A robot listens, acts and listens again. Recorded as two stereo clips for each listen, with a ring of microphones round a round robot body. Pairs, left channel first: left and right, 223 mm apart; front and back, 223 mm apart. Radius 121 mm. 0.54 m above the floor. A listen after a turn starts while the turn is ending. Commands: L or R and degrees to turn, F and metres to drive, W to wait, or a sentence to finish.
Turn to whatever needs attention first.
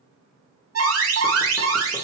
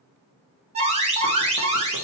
R115
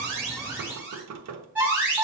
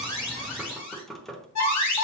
Found it: an alarm, straight ahead, 2 to 4 m away.